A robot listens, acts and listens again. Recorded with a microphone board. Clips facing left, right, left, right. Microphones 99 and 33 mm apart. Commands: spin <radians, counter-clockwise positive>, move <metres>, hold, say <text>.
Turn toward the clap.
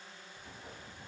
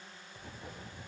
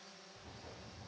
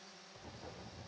hold
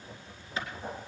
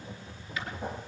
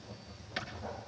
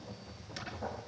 spin 0.52
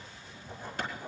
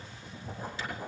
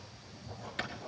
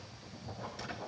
spin 2.09
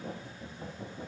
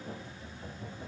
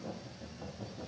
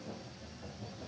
hold
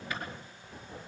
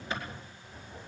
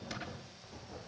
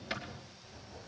spin -0.52
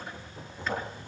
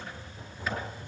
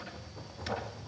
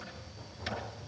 hold
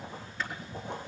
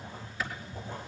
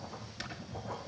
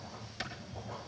say Facing the clap, over 4 m away.